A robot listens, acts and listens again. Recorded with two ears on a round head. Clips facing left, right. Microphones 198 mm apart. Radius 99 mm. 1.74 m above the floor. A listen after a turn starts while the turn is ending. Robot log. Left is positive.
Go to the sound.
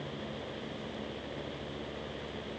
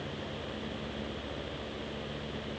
cmd idle
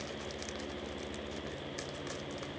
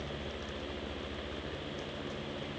cmd idle
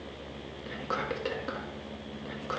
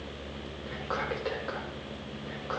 note: The whispering: about 40° left or 140° left.
cmd yaw +40
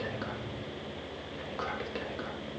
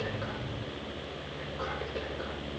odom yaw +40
cmd idle
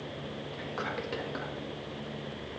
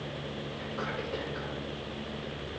note: So it is at 100° left.
cmd yaw +100
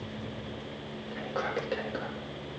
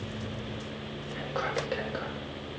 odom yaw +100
cmd fwd 1.0
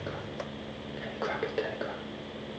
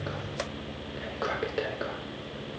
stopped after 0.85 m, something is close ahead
end: Something is in my way. I am facing the whispering but have not reached it.